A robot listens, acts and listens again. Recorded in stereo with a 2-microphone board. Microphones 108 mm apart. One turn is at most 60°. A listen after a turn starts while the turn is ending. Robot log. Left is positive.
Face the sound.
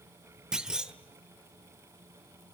cmd yaw -30
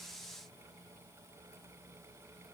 cmd idle
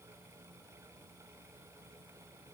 end: I heard a clunk, but can't make it out now. It was about 25° left or 145° right.